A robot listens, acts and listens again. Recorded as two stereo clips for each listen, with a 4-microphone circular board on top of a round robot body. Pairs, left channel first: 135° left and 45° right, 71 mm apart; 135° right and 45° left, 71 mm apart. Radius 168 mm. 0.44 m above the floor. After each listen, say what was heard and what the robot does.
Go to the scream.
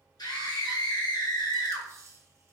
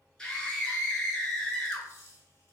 The scream: 140° left. Turn 140° left.
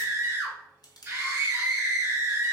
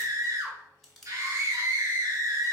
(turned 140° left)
Drive 1.0 m forward.
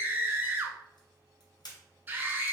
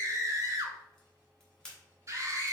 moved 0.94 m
The scream is now 10° left. Turn 10° left.
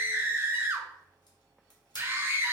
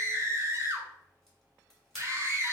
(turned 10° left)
Drive 1.0 m forward.
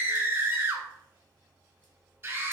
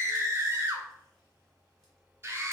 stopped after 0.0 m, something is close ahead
Arrived at the scream, straight ahead.